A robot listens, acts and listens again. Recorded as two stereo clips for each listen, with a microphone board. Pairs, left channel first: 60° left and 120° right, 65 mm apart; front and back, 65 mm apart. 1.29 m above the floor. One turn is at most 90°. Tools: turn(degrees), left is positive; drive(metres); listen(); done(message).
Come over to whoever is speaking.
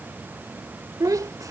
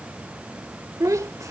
turn(degrees=-90)
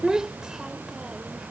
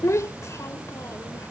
turn(degrees=-40)
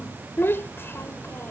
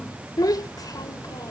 turn(degrees=10)
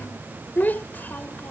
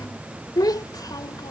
drive(metres=1.0)
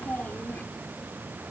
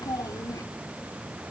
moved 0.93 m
drive(metres=1.0)
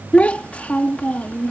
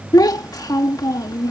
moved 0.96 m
drive(metres=1.0)
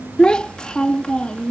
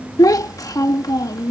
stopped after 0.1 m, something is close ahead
turn(degrees=-15)
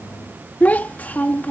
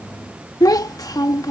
done("I am next to the child speaking.")